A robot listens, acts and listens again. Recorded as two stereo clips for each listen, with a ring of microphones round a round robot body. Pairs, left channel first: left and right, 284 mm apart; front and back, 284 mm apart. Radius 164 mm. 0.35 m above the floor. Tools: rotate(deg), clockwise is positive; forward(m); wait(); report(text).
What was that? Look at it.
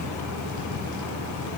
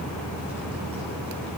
wait()
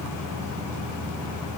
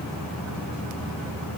wait()
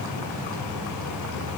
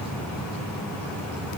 report("I can't make out anything to turn to.")